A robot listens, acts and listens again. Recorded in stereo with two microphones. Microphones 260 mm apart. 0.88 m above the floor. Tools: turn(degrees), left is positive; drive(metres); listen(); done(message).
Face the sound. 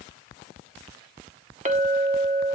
turn(degrees=-25)
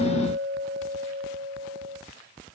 turn(degrees=-130)
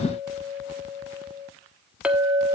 done("Found it: a clink, straight ahead.")